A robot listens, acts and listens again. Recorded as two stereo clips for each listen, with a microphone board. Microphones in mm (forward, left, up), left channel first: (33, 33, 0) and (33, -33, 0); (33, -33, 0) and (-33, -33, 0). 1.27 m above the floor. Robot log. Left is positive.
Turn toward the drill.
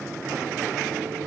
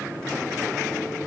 cmd idle
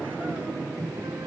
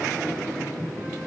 cmd idle
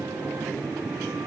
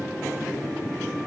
end: I can't make out a drill.